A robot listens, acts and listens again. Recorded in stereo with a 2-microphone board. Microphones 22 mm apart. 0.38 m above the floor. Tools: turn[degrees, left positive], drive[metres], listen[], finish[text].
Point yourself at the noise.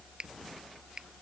Thought: The finger snap: about 35° right or 145° right.
Action: turn[-35]
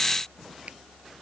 Action: listen[]
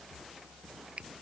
Thought: So it is at 110° right.
Action: turn[-110]
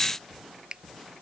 Thought: The finger snap is now 45° right.
Action: turn[-45]
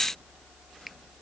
Action: listen[]
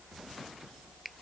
Action: finish[Facing the finger snap.]